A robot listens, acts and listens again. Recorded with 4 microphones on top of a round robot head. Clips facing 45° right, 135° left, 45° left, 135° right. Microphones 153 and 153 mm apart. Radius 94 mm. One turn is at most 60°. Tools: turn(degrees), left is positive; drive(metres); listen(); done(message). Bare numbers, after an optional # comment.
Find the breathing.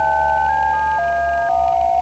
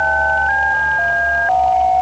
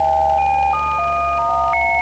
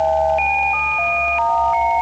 listen()
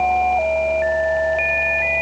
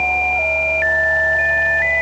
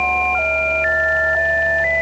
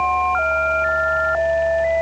listen()
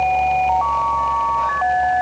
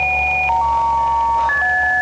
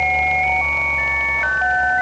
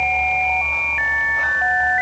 done("I can't make out breathing.")